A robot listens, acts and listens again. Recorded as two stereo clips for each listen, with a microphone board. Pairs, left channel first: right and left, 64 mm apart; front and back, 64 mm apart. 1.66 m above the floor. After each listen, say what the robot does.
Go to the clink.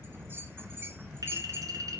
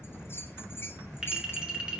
Turn 105° left.
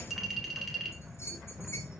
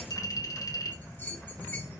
Drive 1.0 m forward.
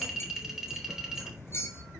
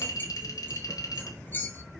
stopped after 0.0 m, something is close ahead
Blocked. The clink is further on, straight ahead.